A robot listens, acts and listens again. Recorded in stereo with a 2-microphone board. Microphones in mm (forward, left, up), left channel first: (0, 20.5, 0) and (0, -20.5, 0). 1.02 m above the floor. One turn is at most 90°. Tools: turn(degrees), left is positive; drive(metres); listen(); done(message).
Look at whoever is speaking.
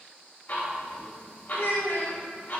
turn(degrees=65)
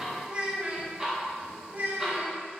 turn(degrees=-45)
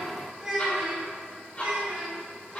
turn(degrees=-15)
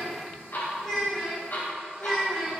done("Found it: a child speaking, straight ahead, 2 to 4 m away.")